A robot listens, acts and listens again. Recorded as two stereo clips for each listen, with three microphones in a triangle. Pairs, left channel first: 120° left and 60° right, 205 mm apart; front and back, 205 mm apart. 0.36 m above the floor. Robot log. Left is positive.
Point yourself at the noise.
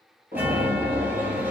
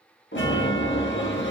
note: The chime: 20° left.
cmd yaw +20
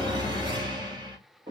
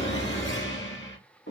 note: The chime is now 10° left.
cmd yaw +10
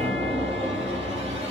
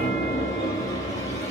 end: Found it: a chime, straight ahead.